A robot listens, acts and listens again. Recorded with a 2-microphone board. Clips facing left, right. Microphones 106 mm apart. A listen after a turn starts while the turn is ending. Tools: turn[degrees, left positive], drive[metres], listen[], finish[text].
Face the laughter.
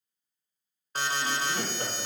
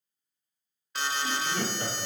Thought: The laughter: about 45° left or 135° left.
Action: turn[45]
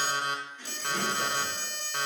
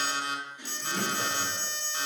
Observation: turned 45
Thought: So it is at 20° right.
Action: turn[-20]
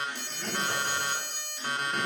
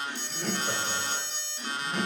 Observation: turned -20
Thought: The laughter is now 35° right.
Action: turn[-35]
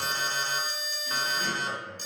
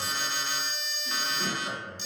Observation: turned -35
Thought: The laughter is now 20° right.
Action: turn[-20]
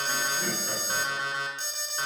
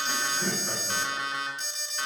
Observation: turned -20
Action: finish[Facing the laughter, 2 to 4 m away.]